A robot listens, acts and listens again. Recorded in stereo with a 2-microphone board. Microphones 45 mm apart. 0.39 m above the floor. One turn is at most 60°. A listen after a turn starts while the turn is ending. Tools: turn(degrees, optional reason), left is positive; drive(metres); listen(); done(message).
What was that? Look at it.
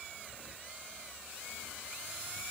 listen()
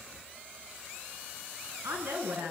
turn(degrees=-60)
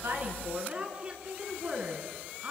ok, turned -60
turn(degrees=-25, reason="So it is at 25° right.")
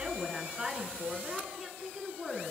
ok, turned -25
done("Found it: a woman speaking, straight ahead.")